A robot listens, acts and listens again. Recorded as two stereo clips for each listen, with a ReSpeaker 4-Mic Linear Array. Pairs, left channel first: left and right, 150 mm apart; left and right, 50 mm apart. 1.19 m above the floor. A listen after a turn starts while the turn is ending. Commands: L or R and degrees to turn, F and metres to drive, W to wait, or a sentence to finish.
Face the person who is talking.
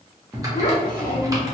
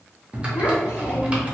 L90
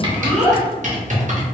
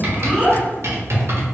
R20
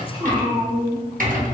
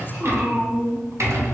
R30
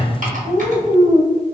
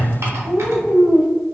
R25
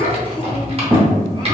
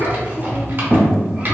R20
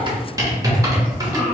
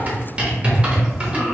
Found it: a child speaking, straight ahead.